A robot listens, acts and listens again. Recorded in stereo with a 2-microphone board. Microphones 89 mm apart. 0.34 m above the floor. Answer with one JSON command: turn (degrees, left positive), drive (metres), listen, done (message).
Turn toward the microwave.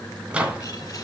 {"turn": -30}
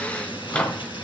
{"turn": 15}
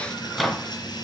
{"done": "Found it: a microwave, straight ahead."}